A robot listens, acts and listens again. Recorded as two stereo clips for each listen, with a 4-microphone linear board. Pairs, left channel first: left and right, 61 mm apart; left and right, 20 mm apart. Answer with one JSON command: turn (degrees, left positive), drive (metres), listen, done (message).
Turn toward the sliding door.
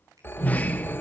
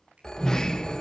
{"turn": 25}
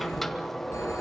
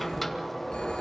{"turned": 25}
{"done": "Found it: a sliding door, straight ahead, 1 to 2 m away."}